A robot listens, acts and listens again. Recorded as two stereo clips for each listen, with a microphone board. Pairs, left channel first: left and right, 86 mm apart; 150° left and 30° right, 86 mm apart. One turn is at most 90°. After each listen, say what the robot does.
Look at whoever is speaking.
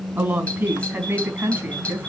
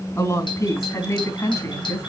Turn 90° right.
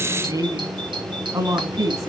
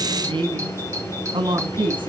Turn 45° right.
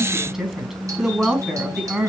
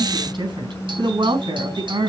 Facing the woman speaking, over 4 m away.